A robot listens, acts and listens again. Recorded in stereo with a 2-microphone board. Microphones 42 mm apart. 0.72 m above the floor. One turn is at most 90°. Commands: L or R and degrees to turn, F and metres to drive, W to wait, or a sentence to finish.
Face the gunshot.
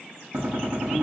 R65
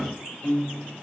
R15
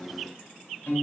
I heard a gunshot from this way, but can't make it out now.